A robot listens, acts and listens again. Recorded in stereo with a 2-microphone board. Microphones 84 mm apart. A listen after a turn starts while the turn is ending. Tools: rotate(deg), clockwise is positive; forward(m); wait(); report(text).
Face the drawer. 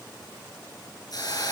wait()
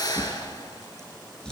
rotate(-30)
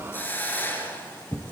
rotate(-140)
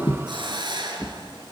rotate(-10)
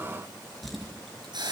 report("Facing the drawer.")